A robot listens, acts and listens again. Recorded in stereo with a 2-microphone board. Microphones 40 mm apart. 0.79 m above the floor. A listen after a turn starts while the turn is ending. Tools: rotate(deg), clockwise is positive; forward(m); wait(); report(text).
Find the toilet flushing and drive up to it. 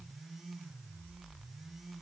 wait()
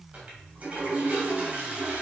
rotate(30)
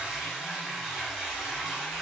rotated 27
forward(1.0)
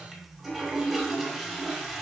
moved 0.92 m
forward(1.0)
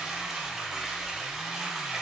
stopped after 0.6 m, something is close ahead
report("Arrived at the toilet flushing, straight ahead.")